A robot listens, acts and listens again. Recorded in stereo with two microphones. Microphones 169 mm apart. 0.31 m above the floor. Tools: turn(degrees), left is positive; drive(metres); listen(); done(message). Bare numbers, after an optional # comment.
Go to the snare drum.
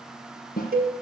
# The snare drum: about 60° left or 120° left.
turn(60)
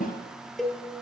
# So it is at 55° left.
turn(55)
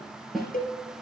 drive(1.0)
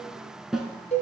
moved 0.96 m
drive(1.0)
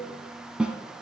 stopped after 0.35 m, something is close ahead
done("Arrived at the snare drum, straight ahead.")